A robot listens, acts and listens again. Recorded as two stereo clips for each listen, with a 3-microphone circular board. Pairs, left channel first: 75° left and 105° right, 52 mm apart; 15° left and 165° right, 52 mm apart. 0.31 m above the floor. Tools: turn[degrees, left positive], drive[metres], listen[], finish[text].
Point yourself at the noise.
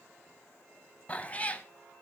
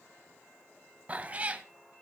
Thought: The cat meowing: 135° left.
Action: turn[135]
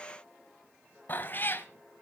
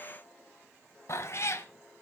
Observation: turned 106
Thought: The cat meowing is now 30° left.
Action: turn[30]
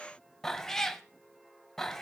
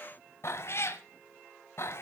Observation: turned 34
Action: finish[Found it: a cat meowing, straight ahead, under 1 m away.]